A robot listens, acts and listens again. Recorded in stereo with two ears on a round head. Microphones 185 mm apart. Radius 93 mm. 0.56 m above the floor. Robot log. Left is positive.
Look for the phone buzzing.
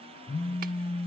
note: The phone buzzing: about 65° left or 115° left.
cmd yaw +65
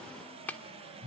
end: Found it: a phone buzzing, straight ahead, 1 to 2 m away.